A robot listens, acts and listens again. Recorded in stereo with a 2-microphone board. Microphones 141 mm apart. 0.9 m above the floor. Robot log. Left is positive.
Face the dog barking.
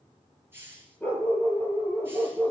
cmd yaw +30
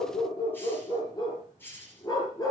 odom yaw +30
note: So it is at 150° left.
cmd yaw +150
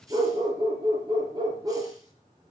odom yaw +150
note: The dog barking is now 35° right.
cmd yaw -35
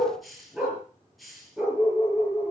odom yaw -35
end: Found it: a dog barking, straight ahead.